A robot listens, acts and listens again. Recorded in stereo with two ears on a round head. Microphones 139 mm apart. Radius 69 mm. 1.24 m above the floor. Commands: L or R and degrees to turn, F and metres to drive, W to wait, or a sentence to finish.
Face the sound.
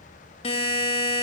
L40
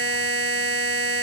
L100
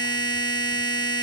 L30
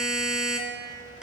Found it: a buzzer, straight ahead, 1 to 2 m away.